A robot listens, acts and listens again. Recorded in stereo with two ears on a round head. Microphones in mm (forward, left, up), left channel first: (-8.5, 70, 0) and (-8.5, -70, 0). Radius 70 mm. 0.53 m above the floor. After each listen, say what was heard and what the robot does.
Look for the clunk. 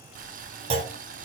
The clunk: about 35° right or 145° right. Turn 35° right.
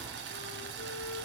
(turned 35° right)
Keep listening.
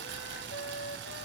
I heard a clunk, but can't make it out now. It was about straight ahead or 110° right.